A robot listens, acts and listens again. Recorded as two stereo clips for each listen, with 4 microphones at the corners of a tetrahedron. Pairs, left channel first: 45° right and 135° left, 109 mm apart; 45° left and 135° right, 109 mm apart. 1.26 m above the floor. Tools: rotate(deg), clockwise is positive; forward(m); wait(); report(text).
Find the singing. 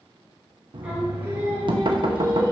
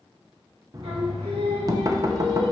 rotate(165)
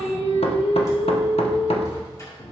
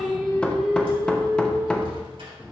rotate(60)
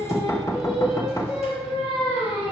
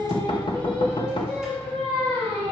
rotate(30)
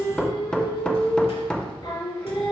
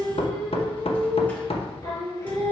report("Found it: singing, straight ahead, 2 to 4 m away.")